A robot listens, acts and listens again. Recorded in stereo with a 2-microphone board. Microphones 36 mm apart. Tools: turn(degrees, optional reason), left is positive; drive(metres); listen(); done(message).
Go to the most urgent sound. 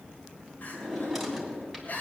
turn(degrees=50, reason="The crying: about 50° left or 130° left.")
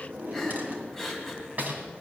drive(metres=1.0)
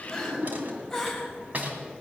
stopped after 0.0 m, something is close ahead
turn(degrees=10, reason="The crying is now 10° left.")
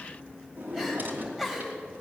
done("Blocked. The crying is further on, straight ahead.")